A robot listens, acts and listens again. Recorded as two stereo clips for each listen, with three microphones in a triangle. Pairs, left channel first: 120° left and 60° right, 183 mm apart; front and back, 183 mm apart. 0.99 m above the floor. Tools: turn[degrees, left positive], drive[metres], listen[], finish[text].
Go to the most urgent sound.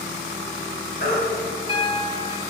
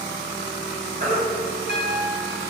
Thought: The baby crying: 145° left.
Action: turn[145]
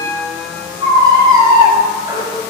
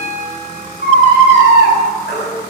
Thought: The baby crying is now 10° left.
Action: turn[10]
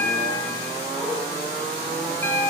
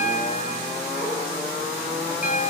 Action: listen[]
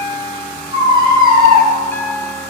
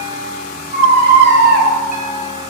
Action: drive[1.0]
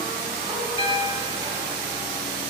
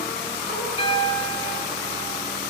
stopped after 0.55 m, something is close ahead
Action: listen[]
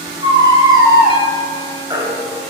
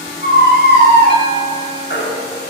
Thought: The baby crying is now 10° left.
Action: turn[10]
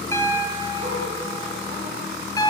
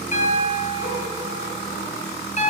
Action: listen[]
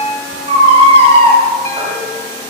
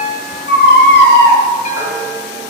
Action: finish[Something is in my way. I am facing the baby crying but have not reached it.]